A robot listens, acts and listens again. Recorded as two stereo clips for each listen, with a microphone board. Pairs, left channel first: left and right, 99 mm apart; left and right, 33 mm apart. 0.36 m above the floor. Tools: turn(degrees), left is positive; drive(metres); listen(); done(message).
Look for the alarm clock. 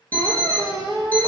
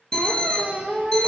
turn(degrees=30)
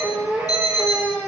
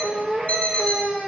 turn(degrees=130)
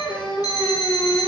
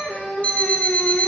turn(degrees=55)
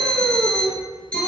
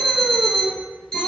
turn(degrees=15)
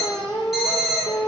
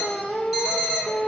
done("Facing the alarm clock, 1 to 2 m away.")